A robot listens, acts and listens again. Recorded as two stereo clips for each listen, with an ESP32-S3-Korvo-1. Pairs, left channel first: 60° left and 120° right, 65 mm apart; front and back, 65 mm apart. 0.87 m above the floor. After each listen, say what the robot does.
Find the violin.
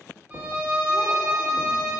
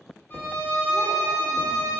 Turn 50° right.
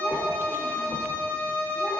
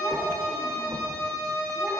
Facing the violin.